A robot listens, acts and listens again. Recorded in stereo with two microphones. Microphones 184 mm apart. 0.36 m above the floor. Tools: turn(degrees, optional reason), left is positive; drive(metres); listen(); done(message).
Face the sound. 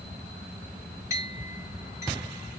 turn(degrees=-15, reason="The clink: about 15° right or 165° right.")
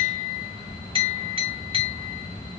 turn(degrees=-150, reason="So it is at 150° right.")
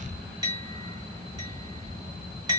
turn(degrees=-25, reason="The clink is now 25° right.")
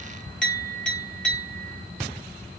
done("Found it: a clink, straight ahead, 1 to 2 m away.")